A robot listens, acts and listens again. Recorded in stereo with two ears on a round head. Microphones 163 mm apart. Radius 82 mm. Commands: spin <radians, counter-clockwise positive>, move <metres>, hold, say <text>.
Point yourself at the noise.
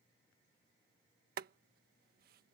spin -1.05
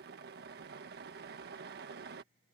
spin -1.13
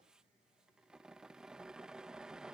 say Found it: boiling, straight ahead.